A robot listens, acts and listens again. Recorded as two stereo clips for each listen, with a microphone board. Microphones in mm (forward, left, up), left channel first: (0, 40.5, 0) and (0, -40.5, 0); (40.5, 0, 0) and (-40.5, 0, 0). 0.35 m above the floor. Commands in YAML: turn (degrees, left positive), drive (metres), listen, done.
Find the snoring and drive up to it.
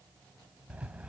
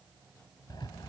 listen: true
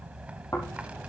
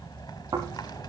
turn: 140
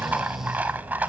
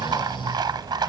listen: true
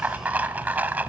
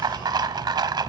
drive: 1.0
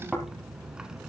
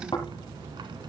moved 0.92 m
drive: 1.0
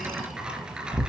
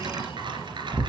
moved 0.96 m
drive: 1.0
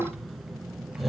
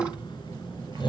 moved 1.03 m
drive: 1.0
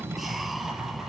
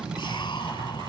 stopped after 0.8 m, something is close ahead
listen: true
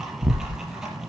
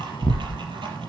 done: "Arrived at the snoring, straight ahead."